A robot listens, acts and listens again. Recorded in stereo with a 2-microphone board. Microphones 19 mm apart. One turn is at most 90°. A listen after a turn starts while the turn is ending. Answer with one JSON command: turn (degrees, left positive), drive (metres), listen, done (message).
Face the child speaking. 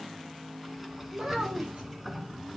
{"turn": -45}
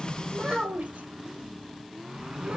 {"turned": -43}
{"turn": -90}
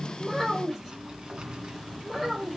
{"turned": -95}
{"done": "Facing the child speaking."}